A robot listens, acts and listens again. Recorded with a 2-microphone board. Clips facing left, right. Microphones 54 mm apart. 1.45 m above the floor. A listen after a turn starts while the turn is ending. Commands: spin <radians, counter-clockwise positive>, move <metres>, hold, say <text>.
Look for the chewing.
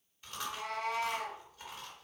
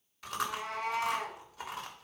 spin -1.31
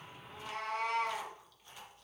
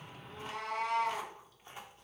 spin -0.52
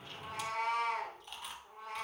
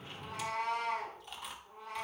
say Facing the chewing.